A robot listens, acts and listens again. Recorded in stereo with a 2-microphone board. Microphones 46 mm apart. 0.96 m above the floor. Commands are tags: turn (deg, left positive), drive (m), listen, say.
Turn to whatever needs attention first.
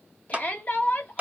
<turn deg="35"/>
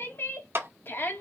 <turn deg="105"/>
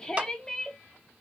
<turn deg="15"/>
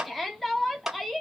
<say>Found it: a shout, straight ahead.</say>